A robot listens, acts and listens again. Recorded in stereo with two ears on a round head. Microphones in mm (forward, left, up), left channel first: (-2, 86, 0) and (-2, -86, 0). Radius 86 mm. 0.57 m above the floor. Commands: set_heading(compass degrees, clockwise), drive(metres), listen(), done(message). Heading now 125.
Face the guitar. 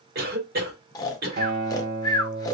set_heading(175)
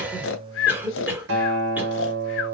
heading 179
set_heading(254)
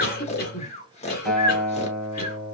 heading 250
done("Found it: a guitar, straight ahead, 1 to 2 m away.")